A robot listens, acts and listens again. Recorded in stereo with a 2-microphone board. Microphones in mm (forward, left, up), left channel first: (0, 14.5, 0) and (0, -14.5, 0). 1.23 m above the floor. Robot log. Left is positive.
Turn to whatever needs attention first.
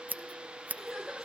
cmd yaw +30
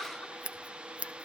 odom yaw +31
cmd idle
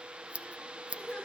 note: So it is at 145° left.
cmd yaw +145
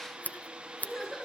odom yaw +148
end: Facing the crying.